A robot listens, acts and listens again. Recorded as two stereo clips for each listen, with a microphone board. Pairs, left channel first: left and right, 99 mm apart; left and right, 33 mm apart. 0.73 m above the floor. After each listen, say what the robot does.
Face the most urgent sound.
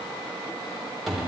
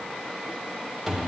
Keep listening.
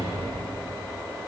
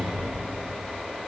Keep listening.
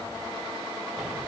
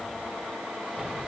I can't make out anything urgent to turn to.